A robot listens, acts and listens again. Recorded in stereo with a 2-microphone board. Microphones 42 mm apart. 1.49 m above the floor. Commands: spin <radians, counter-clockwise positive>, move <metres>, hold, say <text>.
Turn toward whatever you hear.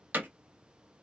spin -0.87
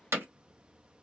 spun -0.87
spin -1.48
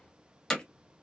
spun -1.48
spin 0.35
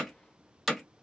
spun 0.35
say Facing the hammering, under 1 m away.